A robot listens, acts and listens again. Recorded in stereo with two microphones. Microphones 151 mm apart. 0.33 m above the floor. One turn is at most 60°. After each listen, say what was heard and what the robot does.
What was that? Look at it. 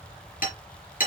The hammering: about 65° left or 115° left. Turn 60° left.
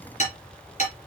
So it is at 55° left. Turn 55° left.
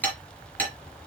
The hammering is now 10° left. Turn 10° left.
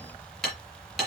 Facing the hammering, over 4 m away.